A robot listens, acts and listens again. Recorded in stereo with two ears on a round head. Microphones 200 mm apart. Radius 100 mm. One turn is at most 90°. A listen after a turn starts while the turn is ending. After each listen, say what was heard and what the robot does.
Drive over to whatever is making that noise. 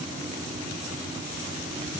Keep listening.
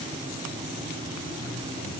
Keep listening.
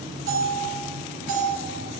The bell: about 60° right or 120° right. Turn 60° right.
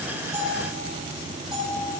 Drive 1.0 m forward.
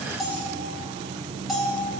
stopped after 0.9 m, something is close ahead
Arrived at the bell, straight ahead.